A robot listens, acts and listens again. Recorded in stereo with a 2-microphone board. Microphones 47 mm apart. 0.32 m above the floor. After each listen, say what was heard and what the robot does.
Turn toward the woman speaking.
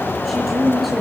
Turn 30° left.
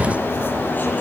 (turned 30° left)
Keep listening.
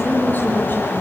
So it is at 140° left. Turn 140° left.
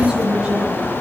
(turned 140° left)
The woman speaking is now 20° right. Turn 20° right.
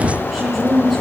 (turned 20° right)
Facing the woman speaking.